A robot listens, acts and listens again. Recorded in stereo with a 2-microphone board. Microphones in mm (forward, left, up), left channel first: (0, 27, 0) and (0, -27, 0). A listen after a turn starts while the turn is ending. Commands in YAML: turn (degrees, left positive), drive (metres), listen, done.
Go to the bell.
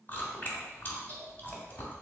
listen: true
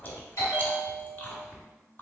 turn: 65
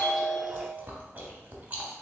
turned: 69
turn: 15
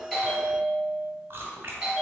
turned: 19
drive: 1.0
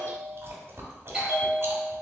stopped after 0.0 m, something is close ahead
turn: -10
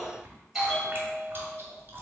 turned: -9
done: "Blocked. The bell is further on, straight ahead."